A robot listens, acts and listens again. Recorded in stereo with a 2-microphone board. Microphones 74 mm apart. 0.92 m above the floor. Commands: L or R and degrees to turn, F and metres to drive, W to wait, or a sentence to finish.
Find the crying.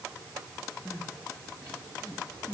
L20
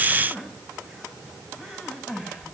Found it: crying, straight ahead, over 4 m away.